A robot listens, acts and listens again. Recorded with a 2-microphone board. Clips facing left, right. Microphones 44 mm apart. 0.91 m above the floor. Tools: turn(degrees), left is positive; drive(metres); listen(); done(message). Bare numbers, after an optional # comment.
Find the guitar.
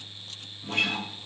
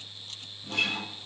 # The guitar: about 50° left or 130° left.
turn(50)
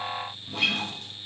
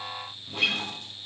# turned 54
done("Found it: a guitar, straight ahead.")